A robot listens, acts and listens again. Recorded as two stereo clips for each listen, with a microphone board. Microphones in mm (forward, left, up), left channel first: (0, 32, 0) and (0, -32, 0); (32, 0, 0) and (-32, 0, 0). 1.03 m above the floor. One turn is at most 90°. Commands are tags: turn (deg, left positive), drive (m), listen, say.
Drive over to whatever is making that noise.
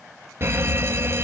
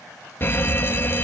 <turn deg="-50"/>
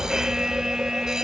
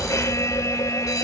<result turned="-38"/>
<turn deg="-10"/>
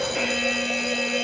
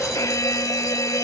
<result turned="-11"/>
<drive m="1.0"/>
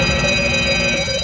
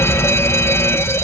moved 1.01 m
<drive m="1.0"/>
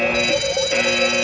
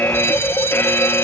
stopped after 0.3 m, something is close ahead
<say>Arrived at the fire alarm, straight ahead.</say>